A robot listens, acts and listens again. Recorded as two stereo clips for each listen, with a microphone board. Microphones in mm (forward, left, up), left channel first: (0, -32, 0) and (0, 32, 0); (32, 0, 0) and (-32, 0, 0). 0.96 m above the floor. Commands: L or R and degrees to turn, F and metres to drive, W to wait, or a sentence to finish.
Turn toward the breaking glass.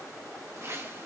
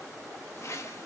W
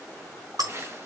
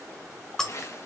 L80
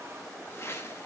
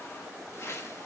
I heard breaking glass from this way, but can't make it out now.